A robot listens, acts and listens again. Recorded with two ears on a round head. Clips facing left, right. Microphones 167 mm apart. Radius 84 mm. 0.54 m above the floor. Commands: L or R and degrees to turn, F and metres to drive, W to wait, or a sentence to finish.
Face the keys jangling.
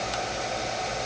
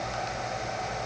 W
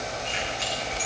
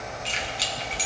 R45
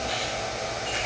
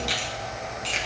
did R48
R75
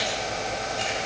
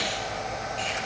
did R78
W
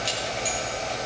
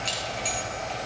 L15
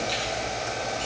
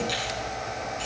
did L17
W
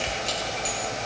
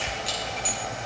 Found it: keys jangling, straight ahead, over 4 m away.